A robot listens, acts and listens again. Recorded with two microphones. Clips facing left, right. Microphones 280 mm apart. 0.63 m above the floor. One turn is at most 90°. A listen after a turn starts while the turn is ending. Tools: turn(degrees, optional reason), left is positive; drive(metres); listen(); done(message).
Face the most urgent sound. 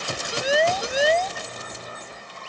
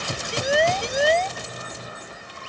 turn(degrees=30)
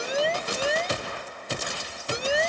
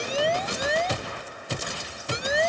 turn(degrees=90, reason="So it is at 145° left.")
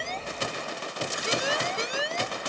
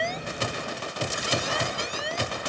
turn(degrees=80, reason="The siren is now 80° left.")
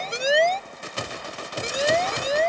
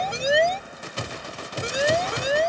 turn(degrees=-10, reason="The siren is now 10° right.")
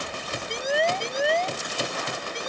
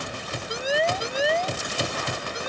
done("Found it: a siren, straight ahead.")